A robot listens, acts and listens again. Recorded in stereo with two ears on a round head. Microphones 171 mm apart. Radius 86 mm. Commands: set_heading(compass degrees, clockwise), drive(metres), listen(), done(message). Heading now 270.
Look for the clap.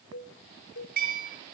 listen()
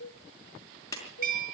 set_heading(250)
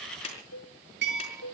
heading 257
set_heading(107)
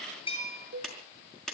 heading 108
done("Found it: a clap, straight ahead.")